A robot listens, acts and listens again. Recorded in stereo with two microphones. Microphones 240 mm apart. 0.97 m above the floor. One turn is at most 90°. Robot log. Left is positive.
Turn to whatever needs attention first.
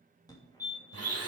note: The fire alarm: about 15° left or 165° left.
cmd yaw +15
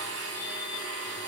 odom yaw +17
cmd idle
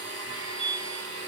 note: So it is at 150° left.
cmd yaw +90
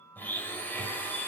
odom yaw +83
note: Nothing new. It was at 70° left.
cmd yaw +70
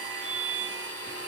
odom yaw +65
end: Found it: a fire alarm, straight ahead.